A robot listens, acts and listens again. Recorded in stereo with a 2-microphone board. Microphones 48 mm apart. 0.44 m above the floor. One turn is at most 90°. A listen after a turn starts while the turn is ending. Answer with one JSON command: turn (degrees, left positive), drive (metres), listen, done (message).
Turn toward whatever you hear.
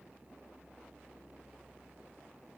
{"listen": true}
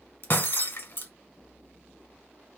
{"turn": 50}
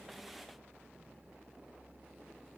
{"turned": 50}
{"listen": true}
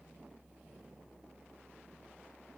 {"done": "I heard breaking glass, but can't make it out now. It was about straight ahead or 80° left."}